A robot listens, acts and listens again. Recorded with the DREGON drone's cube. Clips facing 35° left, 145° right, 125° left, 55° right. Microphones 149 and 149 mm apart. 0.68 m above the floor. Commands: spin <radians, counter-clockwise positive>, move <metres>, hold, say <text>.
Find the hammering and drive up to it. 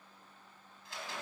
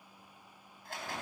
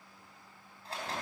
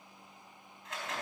hold
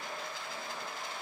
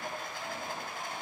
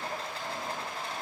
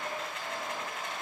hold
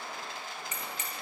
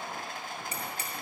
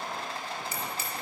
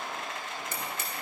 spin -1.57
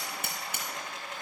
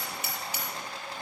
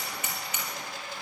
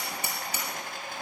move 1.0
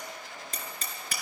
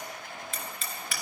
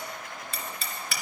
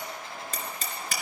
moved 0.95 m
spin -0.17
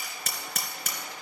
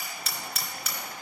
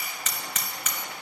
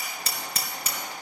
move 1.0
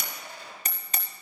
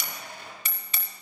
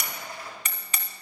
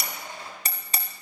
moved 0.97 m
move 1.0
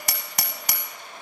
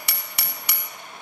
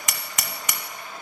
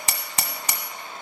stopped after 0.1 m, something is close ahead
say Arrived at the hammering, straight ahead.